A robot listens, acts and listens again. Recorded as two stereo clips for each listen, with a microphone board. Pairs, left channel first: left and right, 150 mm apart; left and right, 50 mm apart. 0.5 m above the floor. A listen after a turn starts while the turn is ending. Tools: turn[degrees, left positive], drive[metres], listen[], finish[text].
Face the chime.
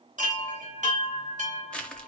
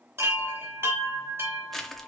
Thought: The chime: about 55° right or 125° right.
Action: turn[-55]
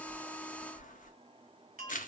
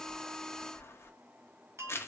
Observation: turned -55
Thought: So it is at 70° right.
Action: turn[-70]
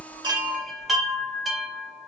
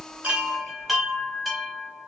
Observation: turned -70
Action: finish[Found it: a chime, straight ahead.]